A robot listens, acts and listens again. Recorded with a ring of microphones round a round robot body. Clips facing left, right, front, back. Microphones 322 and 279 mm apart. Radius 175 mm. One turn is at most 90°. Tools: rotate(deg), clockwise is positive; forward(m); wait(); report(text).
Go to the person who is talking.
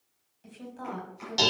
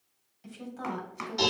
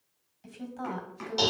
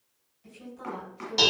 rotate(10)
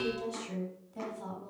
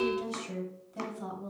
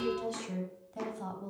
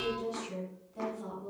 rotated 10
forward(1.0)
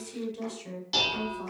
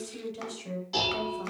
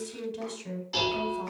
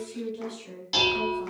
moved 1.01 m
forward(1.0)
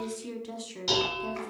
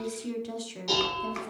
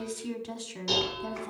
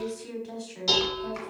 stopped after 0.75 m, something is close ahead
report("Arrived at the woman speaking, straight ahead.")